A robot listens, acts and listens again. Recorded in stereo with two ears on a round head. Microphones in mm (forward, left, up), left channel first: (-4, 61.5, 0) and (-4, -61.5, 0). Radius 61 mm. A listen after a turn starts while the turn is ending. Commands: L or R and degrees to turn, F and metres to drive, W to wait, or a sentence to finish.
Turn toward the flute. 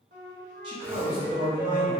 R65
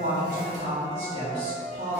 Facing the flute.